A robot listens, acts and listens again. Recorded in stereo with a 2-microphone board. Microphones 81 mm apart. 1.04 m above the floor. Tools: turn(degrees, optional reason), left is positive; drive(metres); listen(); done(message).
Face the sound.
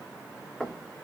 turn(degrees=30)
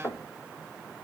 turn(degrees=145, reason="So it is at 145° left.")
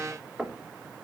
done("Found it: knocking, straight ahead.")